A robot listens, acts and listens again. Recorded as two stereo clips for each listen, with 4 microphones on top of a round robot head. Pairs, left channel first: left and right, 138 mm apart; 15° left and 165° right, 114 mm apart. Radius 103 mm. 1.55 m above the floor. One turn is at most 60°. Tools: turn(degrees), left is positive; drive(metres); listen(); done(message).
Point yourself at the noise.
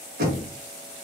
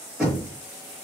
turn(degrees=-60)
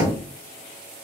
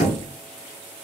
turn(degrees=-15)
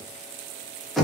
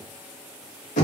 done("Facing the knocking, 1 to 2 m away.")